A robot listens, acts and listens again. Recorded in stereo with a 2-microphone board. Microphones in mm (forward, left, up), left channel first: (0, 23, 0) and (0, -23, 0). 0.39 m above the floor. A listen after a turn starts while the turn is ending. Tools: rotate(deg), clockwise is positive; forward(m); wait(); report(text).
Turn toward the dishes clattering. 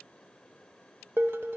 rotate(55)
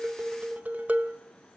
rotate(40)
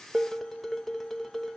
report("Facing the dishes clattering, under 1 m away.")